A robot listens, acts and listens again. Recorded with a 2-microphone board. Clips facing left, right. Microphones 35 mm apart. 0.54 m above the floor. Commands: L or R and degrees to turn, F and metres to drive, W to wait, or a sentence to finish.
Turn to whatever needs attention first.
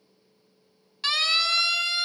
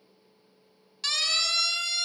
L15
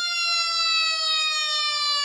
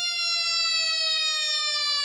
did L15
Facing the siren.